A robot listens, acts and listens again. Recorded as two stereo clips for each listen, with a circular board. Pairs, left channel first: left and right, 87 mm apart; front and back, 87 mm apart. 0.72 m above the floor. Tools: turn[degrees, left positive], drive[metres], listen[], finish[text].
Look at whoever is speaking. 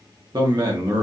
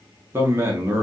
Thought: The man speaking: 120° right.
Action: turn[-120]
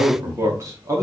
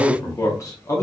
Thought: The man speaking is now 45° right.
Action: turn[-45]
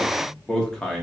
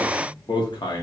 Action: finish[Facing the man speaking, under 1 m away.]